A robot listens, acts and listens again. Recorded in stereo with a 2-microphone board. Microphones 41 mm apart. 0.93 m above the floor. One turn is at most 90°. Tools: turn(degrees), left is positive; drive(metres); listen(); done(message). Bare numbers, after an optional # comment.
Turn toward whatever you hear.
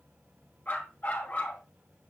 # The dog barking: about 40° left or 140° left.
turn(40)
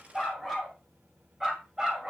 # So it is at 20° right.
turn(-20)
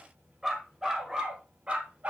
# The dog barking is now 35° right.
turn(-35)
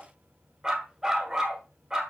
# The dog barking is now 10° right.
turn(-10)
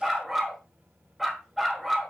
done("Found it: a dog barking, straight ahead.")